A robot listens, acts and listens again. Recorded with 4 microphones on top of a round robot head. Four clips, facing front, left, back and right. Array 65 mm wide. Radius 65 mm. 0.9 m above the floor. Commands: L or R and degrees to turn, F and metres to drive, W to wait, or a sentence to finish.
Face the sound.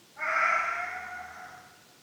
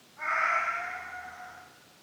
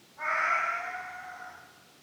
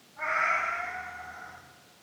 R15
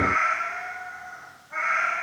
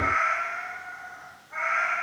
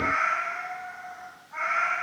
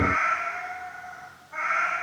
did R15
L20
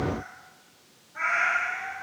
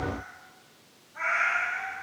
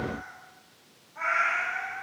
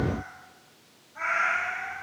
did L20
L20
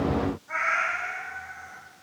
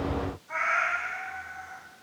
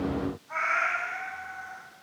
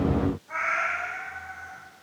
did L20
Facing the cat meowing, 2 to 4 m away.